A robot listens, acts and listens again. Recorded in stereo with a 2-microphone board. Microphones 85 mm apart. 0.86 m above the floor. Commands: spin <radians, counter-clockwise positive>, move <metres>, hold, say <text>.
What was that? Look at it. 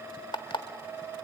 spin 1.31
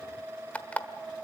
spin 0.26
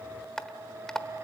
spin 0.17
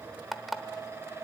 say Found it: an alarm clock, straight ahead.